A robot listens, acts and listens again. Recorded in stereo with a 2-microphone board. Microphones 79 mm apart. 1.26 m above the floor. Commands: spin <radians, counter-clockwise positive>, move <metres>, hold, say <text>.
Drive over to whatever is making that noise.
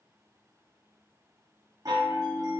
spin -0.96
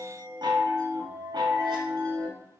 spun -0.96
spin -1.22
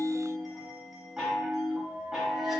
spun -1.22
move 1.0
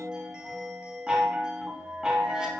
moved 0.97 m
spin -0.17
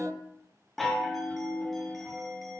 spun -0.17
move 1.0
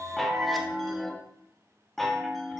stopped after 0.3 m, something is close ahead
say I am next to the chime.